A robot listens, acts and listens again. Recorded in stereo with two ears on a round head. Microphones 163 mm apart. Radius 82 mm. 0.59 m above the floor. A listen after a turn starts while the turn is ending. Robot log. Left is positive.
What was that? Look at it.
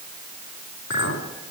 cmd yaw +90
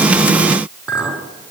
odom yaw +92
end: Found it: a clink, straight ahead.